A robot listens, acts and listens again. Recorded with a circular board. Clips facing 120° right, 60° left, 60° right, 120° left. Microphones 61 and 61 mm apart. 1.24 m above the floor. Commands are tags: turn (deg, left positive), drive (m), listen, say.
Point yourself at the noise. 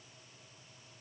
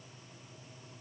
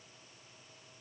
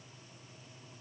<listen/>
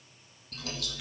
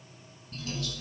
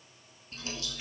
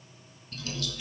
<turn deg="-125"/>
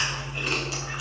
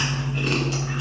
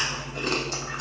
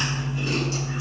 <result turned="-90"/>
<turn deg="-35"/>
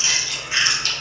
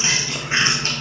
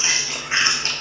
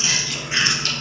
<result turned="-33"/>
<say>Facing the chewing.</say>